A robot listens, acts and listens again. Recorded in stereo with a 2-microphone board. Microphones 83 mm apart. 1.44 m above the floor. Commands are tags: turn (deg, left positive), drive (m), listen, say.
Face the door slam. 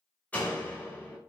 <turn deg="20"/>
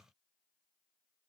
<listen/>
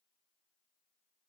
<say>I heard a door slam, but can't make it out now. It was about straight ahead or 140° left.</say>